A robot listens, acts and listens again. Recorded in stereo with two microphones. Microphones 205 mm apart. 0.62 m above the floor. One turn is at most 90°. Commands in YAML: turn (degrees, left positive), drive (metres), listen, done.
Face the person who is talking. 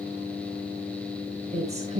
turn: -35
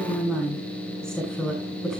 done: "Found it: a woman speaking, straight ahead, over 4 m away."